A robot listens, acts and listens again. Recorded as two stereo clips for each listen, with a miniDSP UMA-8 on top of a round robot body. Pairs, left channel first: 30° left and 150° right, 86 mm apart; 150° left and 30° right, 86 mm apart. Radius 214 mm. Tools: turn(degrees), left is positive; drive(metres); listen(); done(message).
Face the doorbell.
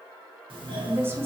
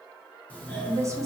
turn(degrees=-140)
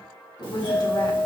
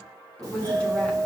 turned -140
turn(degrees=20)
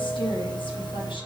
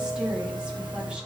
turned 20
done("Found it: a doorbell, straight ahead.")